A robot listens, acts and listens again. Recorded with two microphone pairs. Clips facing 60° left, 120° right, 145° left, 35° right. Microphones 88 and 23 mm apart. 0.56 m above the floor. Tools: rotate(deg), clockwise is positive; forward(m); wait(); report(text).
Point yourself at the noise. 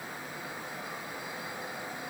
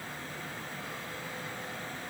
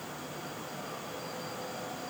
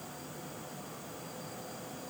wait()
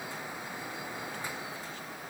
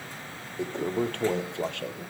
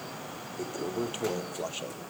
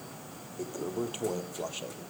rotate(135)
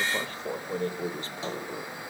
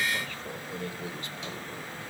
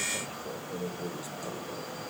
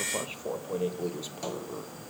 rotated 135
report("Found it: a toilet flushing, straight ahead.")